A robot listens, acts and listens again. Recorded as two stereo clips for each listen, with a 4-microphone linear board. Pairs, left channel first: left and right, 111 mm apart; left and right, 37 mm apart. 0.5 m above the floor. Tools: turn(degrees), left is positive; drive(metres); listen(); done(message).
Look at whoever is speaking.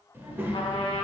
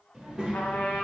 turn(degrees=-20)
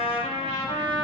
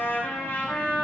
listen()
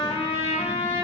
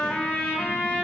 listen()
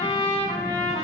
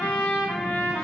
done("I heard a child speaking, but can't make it out now. It was about straight ahead or 140° right.")